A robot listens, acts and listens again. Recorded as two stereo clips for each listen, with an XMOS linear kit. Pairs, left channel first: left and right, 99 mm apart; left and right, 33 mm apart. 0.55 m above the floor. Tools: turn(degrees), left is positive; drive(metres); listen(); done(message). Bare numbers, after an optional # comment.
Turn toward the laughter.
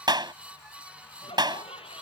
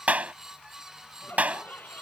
turn(90)
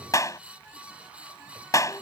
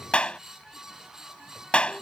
listen()
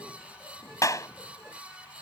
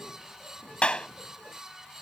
listen()
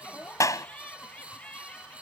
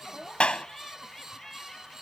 # The laughter is now 15° left.
turn(15)
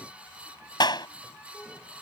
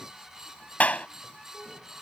listen()
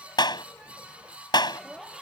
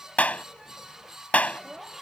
done("Found it: laughter, straight ahead.")